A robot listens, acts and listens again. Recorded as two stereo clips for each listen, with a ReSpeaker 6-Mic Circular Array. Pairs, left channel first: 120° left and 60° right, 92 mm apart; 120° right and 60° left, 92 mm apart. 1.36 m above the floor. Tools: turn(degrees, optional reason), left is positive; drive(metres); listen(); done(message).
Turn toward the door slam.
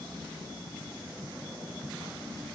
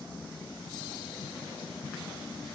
listen()
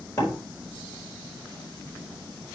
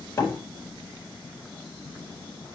turn(degrees=180, reason="The door slam: straight behind.")
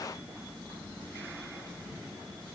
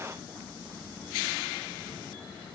done("I heard a door slam from this way, but can't make it out now.")